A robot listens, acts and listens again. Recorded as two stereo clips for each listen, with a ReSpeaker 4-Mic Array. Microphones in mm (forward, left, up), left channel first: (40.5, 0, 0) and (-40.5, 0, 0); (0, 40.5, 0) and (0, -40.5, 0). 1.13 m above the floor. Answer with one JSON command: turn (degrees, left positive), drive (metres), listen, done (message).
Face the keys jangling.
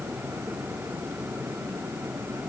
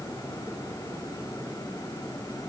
{"listen": true}
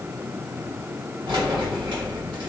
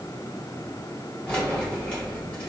{"turn": 165}
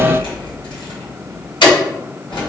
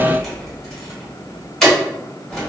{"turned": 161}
{"done": "Facing the keys jangling."}